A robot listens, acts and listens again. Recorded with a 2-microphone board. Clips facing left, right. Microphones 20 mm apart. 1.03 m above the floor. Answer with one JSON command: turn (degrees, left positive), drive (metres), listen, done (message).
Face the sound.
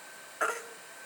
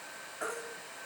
{"turn": 70}
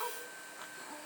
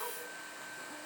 {"turn": 40}
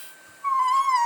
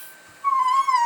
{"done": "Facing the baby crying, 1 to 2 m away."}